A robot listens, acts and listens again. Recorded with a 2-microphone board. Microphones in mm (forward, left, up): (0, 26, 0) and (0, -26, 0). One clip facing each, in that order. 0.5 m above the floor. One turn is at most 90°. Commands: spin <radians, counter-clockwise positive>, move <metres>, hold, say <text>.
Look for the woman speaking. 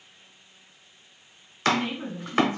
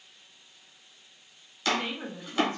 spin -1.05
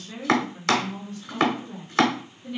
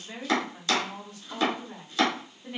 spin -0.26
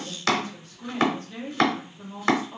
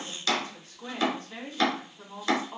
say Found it: a woman speaking, straight ahead.